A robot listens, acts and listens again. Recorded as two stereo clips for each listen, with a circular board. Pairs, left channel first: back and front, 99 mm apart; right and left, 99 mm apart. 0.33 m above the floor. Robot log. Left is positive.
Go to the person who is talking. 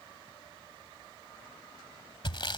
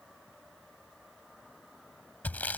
cmd idle
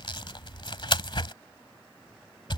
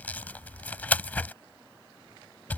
cmd idle
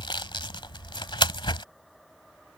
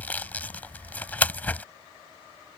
end: I can't make out anyone speaking, only sawing.